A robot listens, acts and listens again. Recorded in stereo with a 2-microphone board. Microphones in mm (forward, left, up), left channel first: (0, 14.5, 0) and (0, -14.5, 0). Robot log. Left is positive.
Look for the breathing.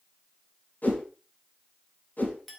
cmd idle
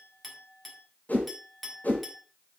cmd idle
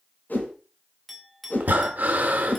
note: The breathing: about 75° right or 105° right.
cmd yaw -75
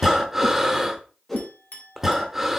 note: So it is at 10° right.
cmd yaw -10
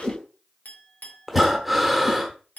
end: Found it: breathing, straight ahead, 1 to 2 m away.